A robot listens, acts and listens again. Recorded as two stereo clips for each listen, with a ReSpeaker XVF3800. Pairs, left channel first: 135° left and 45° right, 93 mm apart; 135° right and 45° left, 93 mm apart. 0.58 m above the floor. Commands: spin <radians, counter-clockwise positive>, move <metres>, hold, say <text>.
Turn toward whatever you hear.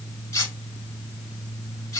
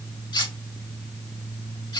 spin -2.97
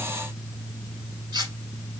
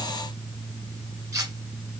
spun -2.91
say Found it: cutlery clinking, straight ahead.